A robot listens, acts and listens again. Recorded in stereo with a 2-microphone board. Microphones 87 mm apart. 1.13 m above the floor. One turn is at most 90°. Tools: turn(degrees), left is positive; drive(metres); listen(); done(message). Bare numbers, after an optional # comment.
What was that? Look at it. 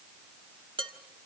# The dishes clattering: about 70° right or 110° right.
turn(-70)
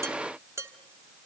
# So it is at 35° right.
turn(-35)
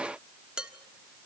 # The dishes clattering is now 10° right.
turn(-10)
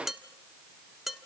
done("Found it: dishes clattering, straight ahead.")